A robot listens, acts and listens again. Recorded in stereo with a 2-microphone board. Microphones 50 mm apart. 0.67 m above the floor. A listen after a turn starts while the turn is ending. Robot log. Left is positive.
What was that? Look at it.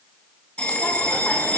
note: The bell: about 20° left or 160° left.
cmd yaw +20
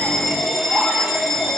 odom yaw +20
end: Facing the bell.